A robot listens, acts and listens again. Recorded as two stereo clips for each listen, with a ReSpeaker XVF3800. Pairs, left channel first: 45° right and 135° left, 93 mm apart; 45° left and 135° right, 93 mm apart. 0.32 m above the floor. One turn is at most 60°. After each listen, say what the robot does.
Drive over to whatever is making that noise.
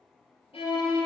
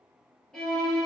Turn 40° right.
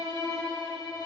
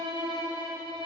Drive 1.0 m forward.
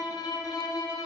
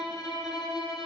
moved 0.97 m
Drive 1.0 m forward.
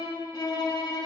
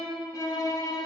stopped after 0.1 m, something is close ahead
I am next to the violin.